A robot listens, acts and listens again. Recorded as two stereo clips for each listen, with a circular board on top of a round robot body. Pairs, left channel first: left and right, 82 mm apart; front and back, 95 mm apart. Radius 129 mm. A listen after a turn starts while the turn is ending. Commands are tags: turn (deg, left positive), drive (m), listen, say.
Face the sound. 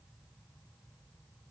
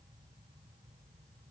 <listen/>
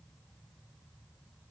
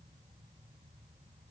<listen/>
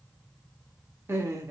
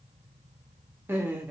<turn deg="-115"/>
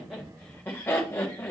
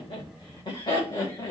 <turn deg="35"/>
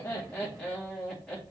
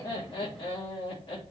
<say>Facing the laughter, 2 to 4 m away.</say>